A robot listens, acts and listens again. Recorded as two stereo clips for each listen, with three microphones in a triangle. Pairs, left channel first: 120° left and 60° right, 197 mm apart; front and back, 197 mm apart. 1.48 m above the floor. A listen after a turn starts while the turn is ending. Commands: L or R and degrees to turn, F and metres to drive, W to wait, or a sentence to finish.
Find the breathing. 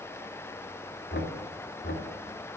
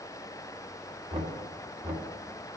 W
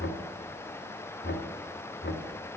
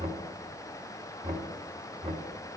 W
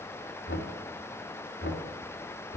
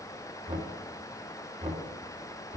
I can't make out breathing, only knocking.